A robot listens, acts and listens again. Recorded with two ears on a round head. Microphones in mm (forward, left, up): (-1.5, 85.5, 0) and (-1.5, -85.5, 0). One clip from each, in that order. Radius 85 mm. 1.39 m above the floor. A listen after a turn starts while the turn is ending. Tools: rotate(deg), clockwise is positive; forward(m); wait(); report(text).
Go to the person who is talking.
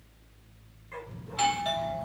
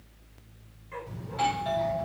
rotate(35)
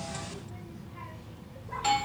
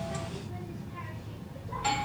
forward(1.0)
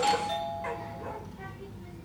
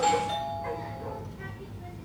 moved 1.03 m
forward(1.0)
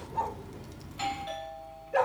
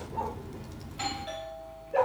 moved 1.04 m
rotate(-10)
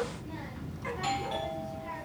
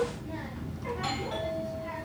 forward(1.0)
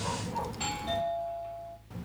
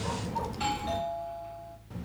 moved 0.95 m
rotate(-15)
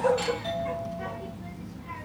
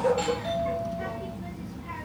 forward(1.0)
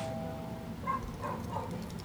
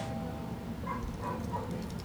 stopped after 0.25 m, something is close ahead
rotate(-10)
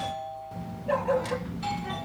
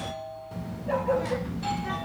report("I am next to the child speaking.")